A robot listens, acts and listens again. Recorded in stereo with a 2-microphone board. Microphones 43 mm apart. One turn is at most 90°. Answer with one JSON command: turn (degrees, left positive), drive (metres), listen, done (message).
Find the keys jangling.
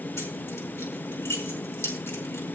{"turn": 90}
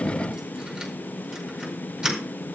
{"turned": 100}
{"turn": -10}
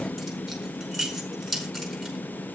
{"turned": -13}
{"done": "Found it: keys jangling, straight ahead, over 4 m away."}